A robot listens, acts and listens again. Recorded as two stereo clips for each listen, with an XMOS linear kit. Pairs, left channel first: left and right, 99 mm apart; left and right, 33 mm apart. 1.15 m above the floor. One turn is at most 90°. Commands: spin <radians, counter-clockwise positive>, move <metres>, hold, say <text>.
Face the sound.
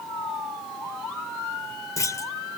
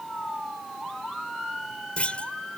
spin 0.61
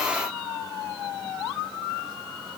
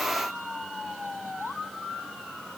hold
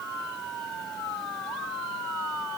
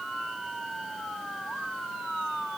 say I heard a clunk, but can't make it out now. It was about straight ahead or 110° left.